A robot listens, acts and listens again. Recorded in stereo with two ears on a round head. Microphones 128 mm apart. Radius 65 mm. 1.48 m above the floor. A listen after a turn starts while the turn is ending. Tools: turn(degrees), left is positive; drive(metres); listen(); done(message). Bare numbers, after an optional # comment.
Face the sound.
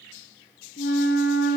turn(90)
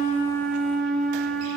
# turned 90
done("Facing the flute.")